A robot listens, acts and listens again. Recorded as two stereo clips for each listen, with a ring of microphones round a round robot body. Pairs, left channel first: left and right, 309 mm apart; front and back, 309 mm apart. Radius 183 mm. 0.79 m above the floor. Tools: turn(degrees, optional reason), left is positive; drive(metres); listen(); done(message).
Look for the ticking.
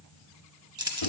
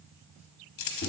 listen()
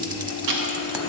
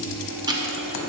turn(degrees=-100, reason="The ticking: 100° right.")
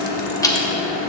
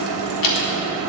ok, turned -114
turn(degrees=10, reason="The ticking is now 10° left.")
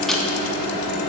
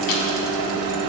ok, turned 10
listen()
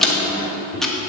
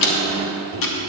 done("Found it: ticking, straight ahead, 1 to 2 m away.")